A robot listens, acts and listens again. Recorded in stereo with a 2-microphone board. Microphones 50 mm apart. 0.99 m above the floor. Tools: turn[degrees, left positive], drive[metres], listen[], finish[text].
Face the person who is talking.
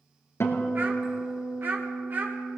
Thought: The child speaking: about 45° right or 135° right.
Action: turn[-45]
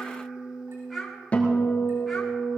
Action: finish[Facing the child speaking.]